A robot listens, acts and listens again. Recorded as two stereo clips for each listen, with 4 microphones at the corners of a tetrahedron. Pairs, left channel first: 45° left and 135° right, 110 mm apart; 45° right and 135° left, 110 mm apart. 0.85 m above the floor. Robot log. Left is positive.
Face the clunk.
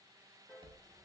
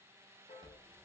cmd idle
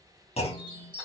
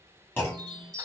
note: The clunk: 25° left.
cmd yaw +25
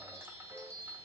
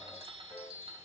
end: Facing where the clunk came from. I can't hear it now.